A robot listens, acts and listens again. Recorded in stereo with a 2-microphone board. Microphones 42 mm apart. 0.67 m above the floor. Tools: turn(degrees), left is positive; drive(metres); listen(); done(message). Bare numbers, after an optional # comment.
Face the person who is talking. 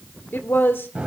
# The woman speaking: about 60° left or 120° left.
turn(60)
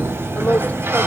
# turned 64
# So it is at 50° left.
turn(50)
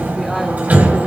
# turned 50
listen()
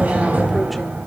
listen()
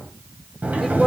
done("Found it: a woman speaking, straight ahead, 1 to 2 m away.")